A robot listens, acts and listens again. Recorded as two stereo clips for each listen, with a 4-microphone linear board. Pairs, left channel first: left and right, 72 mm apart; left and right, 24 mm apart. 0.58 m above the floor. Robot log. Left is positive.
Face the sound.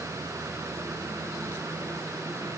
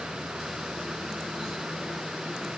cmd idle
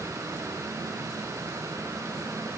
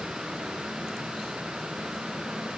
cmd idle
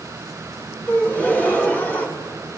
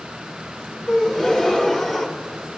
note: The gasp: about 25° left or 155° left.
cmd yaw +25
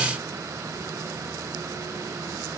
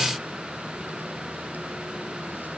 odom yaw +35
cmd idle
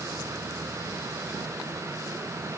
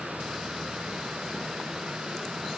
end: I heard a gasp, but can't make it out now. It was about 10° right or 120° left.